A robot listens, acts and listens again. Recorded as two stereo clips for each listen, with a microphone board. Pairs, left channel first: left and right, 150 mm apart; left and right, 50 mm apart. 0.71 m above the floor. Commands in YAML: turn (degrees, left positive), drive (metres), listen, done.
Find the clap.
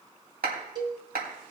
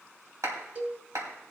turn: -90
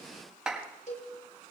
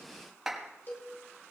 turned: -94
done: "Facing the clap."